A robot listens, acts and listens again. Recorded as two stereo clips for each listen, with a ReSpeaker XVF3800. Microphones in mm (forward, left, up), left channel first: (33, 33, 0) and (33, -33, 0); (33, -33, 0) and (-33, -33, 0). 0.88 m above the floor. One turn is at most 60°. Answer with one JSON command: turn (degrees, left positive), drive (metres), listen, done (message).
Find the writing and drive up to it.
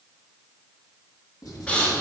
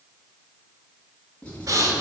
{"turn": 60}
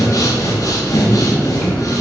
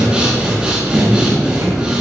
{"turn": 10}
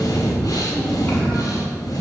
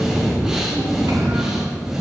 {"listen": true}
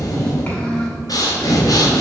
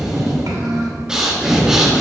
{"done": "Facing where the writing came from. I can't hear it now. I did not reach it."}